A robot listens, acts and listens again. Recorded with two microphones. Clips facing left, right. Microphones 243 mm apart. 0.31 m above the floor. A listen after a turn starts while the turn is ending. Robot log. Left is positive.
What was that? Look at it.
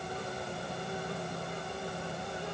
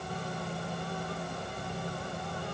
cmd idle
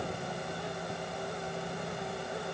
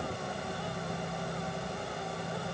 cmd idle
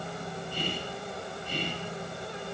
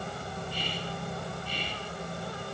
note: The whispering: about 45° left or 135° left.
cmd yaw +45
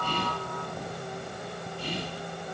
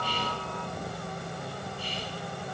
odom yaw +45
note: So it is at 80° left.
cmd yaw +80
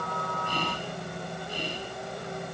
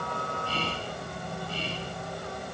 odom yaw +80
note: The whispering is now 15° left.
cmd yaw +15
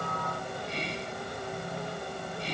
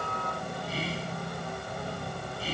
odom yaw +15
end: Found it: whispering, straight ahead.